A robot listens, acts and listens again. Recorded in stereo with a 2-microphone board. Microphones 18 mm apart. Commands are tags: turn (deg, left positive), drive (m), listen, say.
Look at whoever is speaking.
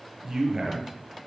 <turn deg="-20"/>
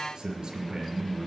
<turn deg="-135"/>
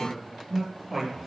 <turn deg="-10"/>
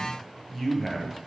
<say>Facing the man speaking.</say>